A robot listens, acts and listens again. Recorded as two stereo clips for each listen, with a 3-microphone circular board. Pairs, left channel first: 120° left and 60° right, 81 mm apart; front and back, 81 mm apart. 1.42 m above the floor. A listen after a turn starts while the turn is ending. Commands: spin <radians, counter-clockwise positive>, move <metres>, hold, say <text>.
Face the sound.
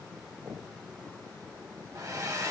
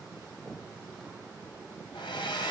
spin -0.17
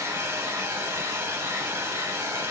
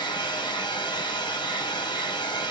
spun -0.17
say Facing the hair dryer.